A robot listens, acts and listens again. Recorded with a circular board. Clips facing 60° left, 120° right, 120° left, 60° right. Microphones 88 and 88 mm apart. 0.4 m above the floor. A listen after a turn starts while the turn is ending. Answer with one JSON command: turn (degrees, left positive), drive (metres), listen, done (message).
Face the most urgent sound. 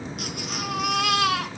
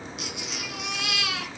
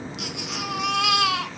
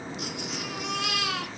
{"turn": 100}
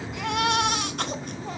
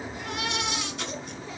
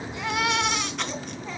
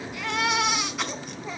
{"turn": 25}
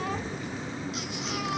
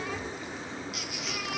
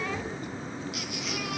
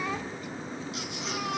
{"listen": true}
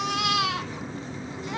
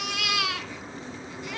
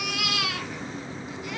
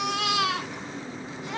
{"done": "Facing the baby crying, 2 to 4 m away."}